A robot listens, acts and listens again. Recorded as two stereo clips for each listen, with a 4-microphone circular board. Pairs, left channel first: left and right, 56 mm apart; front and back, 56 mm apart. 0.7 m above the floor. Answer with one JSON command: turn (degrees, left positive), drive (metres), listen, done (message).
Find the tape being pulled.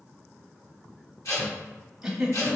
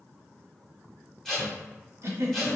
{"turn": 85}
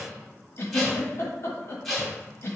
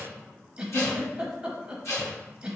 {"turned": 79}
{"done": "Found it: tape being pulled, straight ahead, 1 to 2 m away."}